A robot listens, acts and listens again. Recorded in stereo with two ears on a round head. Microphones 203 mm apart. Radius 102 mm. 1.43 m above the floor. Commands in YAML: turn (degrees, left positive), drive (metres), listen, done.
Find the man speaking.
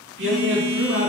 turn: -55
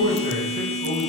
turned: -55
turn: -85
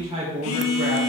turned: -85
turn: -30
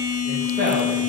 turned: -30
turn: -25
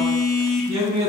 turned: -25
turn: -15
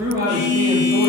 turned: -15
turn: -10
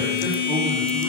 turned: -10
listen: true
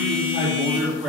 done: "Facing the man speaking, 2 to 4 m away."